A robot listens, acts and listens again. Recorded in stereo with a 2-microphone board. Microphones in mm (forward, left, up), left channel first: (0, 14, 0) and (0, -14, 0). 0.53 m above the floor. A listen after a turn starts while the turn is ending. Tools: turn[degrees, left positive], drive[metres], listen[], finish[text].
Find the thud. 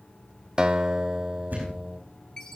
Action: turn[-90]
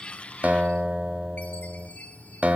Action: finish[I heard a thud from this way, but can't make it out now.]